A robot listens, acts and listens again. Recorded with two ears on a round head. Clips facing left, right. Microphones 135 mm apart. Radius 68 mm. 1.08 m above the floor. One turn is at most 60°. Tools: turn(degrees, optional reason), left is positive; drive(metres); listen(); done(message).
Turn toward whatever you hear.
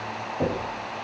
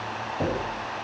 turn(degrees=30)
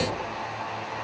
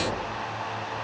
turn(degrees=60, reason="So it is at 145° left.")
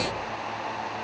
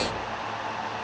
turn(degrees=60, reason="Nothing new. It was at 85° left.")
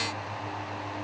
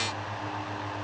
turn(degrees=25, reason="Nothing new. It was at 25° left.")
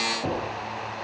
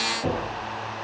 done("Facing the knocking.")